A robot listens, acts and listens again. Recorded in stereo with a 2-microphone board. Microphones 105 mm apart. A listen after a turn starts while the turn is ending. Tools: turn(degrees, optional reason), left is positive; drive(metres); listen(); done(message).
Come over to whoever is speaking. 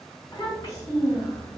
turn(degrees=35, reason="The child speaking: about 35° left or 145° left.")
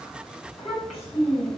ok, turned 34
drive(metres=1.0)
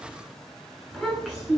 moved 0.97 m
drive(metres=1.0)
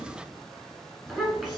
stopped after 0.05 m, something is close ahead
done("I am next to the child speaking.")